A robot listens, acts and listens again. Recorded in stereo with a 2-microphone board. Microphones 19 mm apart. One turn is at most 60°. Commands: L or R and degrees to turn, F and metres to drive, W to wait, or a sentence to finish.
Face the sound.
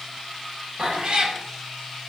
R45
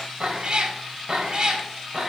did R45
R35
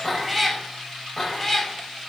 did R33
L15
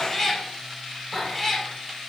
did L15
L10
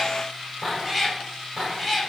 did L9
Found it: a cat meowing, straight ahead, 2 to 4 m away.